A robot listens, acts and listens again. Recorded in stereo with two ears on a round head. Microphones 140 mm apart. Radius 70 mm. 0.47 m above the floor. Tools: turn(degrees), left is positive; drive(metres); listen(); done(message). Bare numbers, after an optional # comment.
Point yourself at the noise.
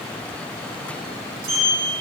# The sliding door: about 60° right or 120° right.
turn(-60)
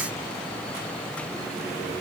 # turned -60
listen()
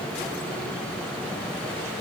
listen()
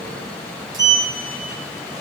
# So it is at 30° right.
turn(-30)
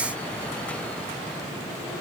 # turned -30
listen()
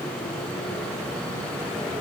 listen()
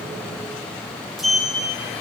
done("Facing the sliding door.")